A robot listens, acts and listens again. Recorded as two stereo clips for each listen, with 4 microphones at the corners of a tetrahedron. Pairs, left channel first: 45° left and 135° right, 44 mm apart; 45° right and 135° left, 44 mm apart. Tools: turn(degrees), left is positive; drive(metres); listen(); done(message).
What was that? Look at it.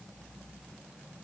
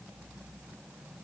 listen()
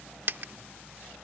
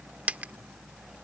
turn(degrees=-170)
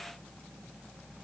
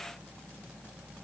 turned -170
done("I heard a dropped coin from this way, but can't make it out now.")